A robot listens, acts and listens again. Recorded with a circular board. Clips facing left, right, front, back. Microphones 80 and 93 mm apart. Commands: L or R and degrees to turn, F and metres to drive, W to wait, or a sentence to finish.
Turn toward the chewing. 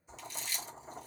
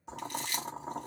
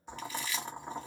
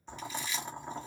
R110
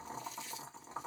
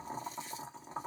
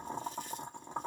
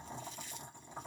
W
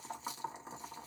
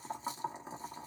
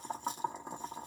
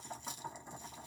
W
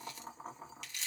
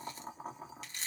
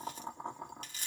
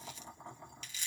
R35
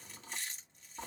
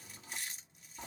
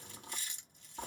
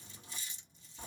Facing the chewing, 1 to 2 m away.